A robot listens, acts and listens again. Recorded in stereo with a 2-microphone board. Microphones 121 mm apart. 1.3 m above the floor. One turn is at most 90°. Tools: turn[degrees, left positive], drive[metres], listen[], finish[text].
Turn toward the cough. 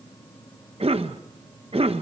Thought: The cough: about 50° right or 130° right.
Action: turn[-50]
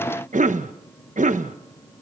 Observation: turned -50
Thought: So it is at 80° right.
Action: turn[-80]
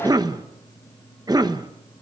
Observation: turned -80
Thought: The cough is now 30° right.
Action: turn[-30]
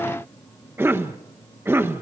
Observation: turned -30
Thought: The cough is now 20° right.
Action: turn[-20]
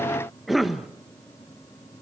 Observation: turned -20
Action: finish[Facing the cough.]